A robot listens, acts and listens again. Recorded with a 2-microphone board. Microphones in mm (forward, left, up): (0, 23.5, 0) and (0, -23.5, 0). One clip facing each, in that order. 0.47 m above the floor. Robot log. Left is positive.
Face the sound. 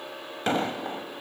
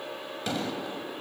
note: The explosion: about 40° left or 140° left.
cmd yaw +40
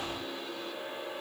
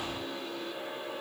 cmd idle
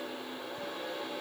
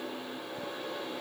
end: I heard an explosion, but can't make it out now. It was about straight ahead or 100° left.